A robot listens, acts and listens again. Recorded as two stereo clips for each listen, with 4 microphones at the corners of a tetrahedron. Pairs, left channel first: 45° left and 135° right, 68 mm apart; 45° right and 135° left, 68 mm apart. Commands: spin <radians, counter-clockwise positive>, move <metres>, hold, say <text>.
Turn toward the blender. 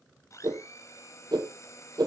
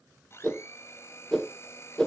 say Facing the blender, over 4 m away.